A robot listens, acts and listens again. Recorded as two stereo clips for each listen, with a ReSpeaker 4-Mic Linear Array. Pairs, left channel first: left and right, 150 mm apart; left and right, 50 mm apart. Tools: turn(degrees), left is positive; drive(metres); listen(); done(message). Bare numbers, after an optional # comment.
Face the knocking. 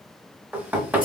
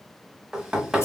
turn(-30)
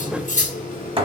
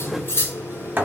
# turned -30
# So it is at 135° right.
turn(-135)
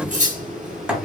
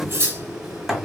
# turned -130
done("Found it: knocking, straight ahead.")